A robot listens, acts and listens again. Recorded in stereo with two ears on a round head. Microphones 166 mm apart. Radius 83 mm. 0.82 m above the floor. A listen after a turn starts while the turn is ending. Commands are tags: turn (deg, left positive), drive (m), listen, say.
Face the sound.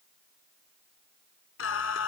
<turn deg="90"/>
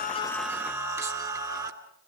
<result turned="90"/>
<turn deg="-20"/>
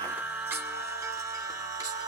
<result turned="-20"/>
<turn deg="-20"/>
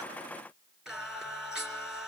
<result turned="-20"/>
<say>Found it: singing, straight ahead.</say>